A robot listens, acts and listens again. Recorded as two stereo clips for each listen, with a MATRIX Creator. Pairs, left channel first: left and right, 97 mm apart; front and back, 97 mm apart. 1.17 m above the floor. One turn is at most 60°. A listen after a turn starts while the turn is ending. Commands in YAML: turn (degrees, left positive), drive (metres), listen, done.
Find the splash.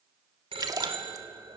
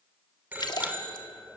turn: -40
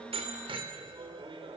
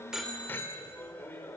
done: "I heard a splash from this way, but can't make it out now."